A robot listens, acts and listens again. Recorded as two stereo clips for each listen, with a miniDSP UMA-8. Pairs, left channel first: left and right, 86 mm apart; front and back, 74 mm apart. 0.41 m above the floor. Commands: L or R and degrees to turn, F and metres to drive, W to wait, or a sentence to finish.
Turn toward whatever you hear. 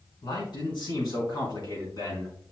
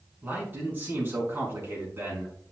L125
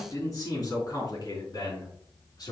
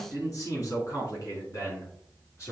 L50
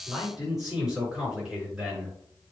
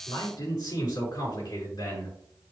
R10
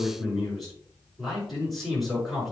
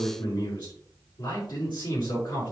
Facing the man speaking, over 4 m away.